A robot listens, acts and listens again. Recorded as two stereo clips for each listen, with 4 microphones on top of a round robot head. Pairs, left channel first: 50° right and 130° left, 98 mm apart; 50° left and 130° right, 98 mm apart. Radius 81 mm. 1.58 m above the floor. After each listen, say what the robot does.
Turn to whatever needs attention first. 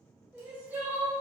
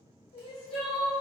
Turn 60° left.
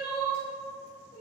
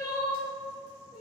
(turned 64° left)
Found it: crying, straight ahead, 1 to 2 m away.